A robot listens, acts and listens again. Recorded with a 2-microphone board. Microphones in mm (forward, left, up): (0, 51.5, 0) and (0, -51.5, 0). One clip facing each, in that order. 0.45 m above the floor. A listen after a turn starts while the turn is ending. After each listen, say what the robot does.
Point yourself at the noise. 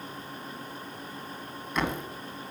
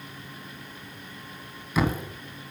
Turn 30° right.
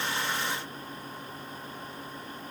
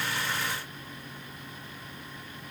Keep listening.
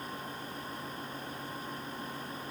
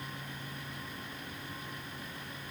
I heard a thud, but can't make it out now. It was about 25° left or 145° right.